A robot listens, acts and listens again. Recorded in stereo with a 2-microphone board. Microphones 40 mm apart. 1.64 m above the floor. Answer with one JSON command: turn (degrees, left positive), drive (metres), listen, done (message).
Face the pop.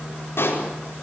{"turn": 90}
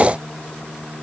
{"done": "I heard a pop from this way, but can't make it out now."}